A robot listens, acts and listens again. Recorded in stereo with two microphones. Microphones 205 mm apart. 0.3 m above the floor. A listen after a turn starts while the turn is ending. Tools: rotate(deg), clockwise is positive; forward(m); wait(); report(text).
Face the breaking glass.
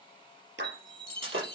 rotate(90)
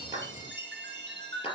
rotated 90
report("Facing where the breaking glass came from. I can't hear it now.")